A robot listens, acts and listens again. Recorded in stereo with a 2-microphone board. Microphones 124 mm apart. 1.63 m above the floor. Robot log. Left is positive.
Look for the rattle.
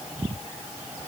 cmd idle
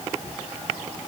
cmd idle
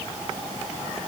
end: I can't make out a rattle to turn to.